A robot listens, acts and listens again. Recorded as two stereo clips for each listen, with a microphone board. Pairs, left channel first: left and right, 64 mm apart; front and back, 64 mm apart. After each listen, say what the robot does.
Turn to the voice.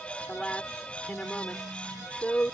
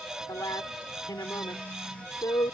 Turn 20° left.
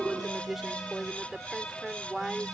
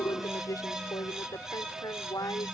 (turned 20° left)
Found it: a woman speaking, straight ahead.